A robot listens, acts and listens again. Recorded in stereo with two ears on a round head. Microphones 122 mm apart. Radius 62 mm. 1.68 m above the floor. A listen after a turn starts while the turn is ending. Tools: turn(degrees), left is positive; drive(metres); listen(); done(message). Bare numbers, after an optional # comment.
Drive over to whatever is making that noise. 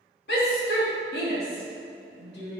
turn(90)
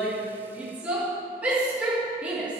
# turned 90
# So it is at 10° right.
turn(-10)
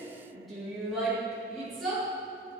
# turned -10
drive(1.0)
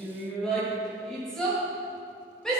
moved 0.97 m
drive(1.0)
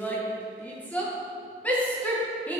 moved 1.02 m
# The shout is now 10° left.
turn(10)
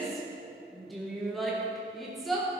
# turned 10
drive(1.0)
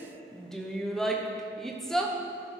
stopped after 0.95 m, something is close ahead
done("I am next to the shout.")